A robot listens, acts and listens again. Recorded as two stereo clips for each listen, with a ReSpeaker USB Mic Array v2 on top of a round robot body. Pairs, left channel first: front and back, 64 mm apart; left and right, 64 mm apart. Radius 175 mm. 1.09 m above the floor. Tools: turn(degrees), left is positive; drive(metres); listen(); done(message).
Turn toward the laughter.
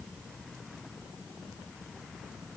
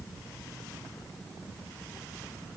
listen()
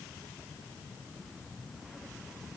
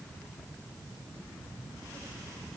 listen()
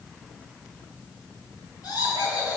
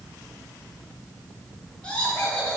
turn(degrees=20)
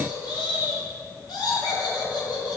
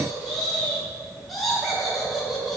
done("Found it: laughter, straight ahead.")